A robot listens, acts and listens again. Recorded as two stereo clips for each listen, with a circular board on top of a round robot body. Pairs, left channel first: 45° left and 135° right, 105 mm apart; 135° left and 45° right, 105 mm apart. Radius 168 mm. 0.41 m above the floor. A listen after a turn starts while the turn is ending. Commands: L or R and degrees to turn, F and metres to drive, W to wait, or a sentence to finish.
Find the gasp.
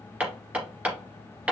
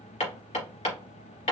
W
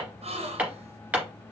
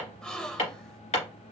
R145
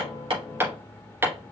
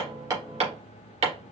Facing where the gasp came from. I can't hear it now.